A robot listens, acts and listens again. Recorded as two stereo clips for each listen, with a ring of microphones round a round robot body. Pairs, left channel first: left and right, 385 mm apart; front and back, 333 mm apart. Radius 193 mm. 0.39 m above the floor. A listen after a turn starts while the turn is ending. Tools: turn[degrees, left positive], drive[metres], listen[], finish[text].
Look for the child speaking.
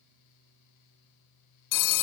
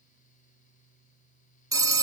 Action: listen[]
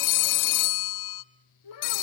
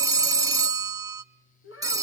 Thought: The child speaking: 50° left.
Action: turn[50]
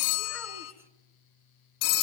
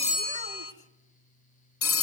Action: listen[]
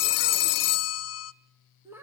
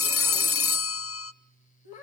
Action: finish[Facing the child speaking, 2 to 4 m away.]